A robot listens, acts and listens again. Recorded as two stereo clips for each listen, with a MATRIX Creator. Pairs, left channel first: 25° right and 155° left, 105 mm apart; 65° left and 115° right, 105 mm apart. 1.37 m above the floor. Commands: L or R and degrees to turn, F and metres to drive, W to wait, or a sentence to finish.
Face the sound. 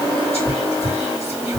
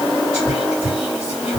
R30
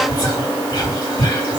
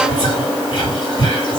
L25
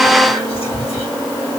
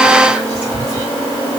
Found it: whispering, straight ahead, 2 to 4 m away.